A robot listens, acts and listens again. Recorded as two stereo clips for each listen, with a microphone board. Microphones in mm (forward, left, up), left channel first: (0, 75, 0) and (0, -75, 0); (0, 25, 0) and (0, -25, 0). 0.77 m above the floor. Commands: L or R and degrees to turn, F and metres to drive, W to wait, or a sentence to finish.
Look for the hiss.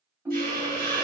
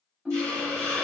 R90
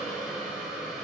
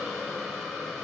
Found it: a hiss, straight ahead, 1 to 2 m away.